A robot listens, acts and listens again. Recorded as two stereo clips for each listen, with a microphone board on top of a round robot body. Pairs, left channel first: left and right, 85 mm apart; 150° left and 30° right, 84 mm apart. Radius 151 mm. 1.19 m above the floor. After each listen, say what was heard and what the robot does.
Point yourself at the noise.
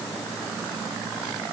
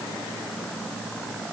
Keep listening.
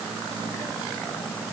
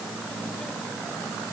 Keep listening.
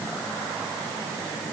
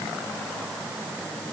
I can't make out anything to turn to.